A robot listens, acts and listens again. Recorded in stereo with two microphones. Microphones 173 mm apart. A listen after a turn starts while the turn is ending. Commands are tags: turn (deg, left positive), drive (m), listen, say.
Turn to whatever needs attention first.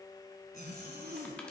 <listen/>
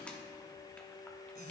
<listen/>
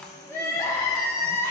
<turn deg="20"/>
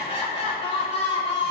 <turn deg="145"/>
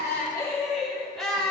<say>Facing the crying.</say>